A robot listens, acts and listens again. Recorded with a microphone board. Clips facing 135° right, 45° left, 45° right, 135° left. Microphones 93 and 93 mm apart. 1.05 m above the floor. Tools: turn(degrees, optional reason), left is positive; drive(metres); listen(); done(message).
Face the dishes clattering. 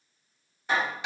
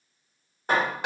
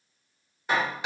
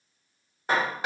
listen()
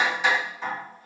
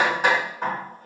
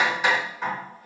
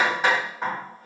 listen()
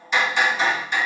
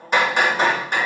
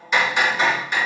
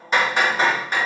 done("I can't make out dishes clattering to turn to.")